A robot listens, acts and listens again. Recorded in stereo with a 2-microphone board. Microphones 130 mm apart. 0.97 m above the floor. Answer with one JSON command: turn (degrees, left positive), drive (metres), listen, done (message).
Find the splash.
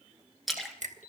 {"turn": 30}
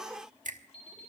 {"listen": true}
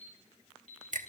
{"done": "I heard a splash, but can't make it out now. It was about 30° right or 150° left."}